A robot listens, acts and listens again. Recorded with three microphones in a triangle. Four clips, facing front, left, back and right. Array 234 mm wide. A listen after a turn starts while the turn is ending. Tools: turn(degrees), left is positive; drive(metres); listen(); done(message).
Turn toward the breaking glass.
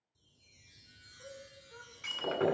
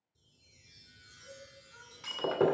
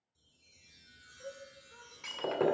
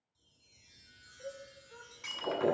turn(degrees=105)
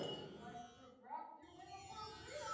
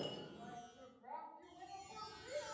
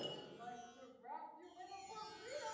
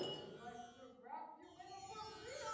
done("I heard breaking glass from this way, but can't make it out now.")